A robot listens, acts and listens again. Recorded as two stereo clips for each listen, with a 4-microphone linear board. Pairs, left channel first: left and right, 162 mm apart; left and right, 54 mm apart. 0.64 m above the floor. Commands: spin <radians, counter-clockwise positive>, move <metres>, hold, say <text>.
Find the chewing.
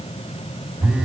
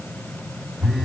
hold
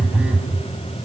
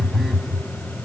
hold
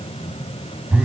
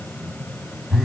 say I can't make out chewing, only a phone buzzing.